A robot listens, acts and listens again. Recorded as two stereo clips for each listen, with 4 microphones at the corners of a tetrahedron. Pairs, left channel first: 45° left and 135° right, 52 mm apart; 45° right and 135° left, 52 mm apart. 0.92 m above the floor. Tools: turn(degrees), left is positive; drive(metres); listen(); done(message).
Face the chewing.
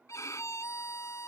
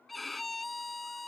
listen()
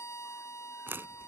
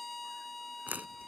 turn(degrees=-175)
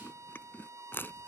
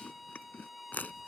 done("Found it: chewing, straight ahead.")